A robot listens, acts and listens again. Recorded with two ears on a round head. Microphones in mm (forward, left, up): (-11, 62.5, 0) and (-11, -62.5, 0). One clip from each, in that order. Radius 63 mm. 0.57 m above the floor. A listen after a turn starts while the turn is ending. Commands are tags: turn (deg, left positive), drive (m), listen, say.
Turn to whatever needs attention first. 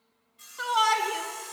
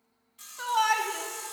<turn deg="30"/>
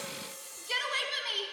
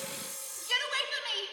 <turn deg="-25"/>
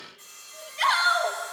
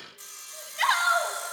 <turn deg="-20"/>
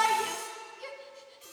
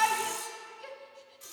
<say>Facing the shout.</say>